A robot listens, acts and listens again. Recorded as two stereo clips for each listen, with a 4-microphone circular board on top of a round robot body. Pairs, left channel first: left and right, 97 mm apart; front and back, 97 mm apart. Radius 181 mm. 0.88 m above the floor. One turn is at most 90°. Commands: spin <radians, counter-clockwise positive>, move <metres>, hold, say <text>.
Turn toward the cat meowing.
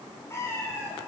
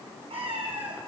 spin 1.57
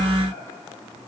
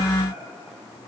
spin 1.13
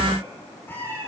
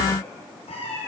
spin 0.35
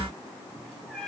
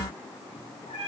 spin 0.17
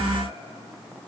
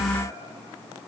hold
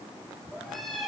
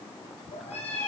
say Facing the cat meowing, over 4 m away.